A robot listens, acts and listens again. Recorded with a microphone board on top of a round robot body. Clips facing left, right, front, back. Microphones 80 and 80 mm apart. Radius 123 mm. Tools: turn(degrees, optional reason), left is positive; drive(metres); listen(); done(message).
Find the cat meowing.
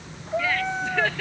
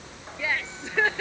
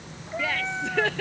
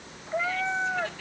turn(degrees=115, reason="The cat meowing: 115° left.")
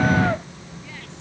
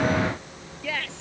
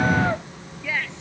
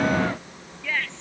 listen()
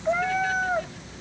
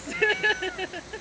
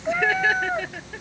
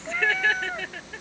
turn(degrees=60, reason="The cat meowing is now 60° left.")
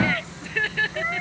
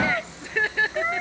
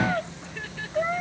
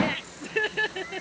turn(degrees=-20, reason="The cat meowing is now 20° right.")
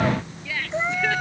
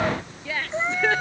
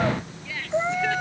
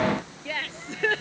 done("Found it: a cat meowing, straight ahead.")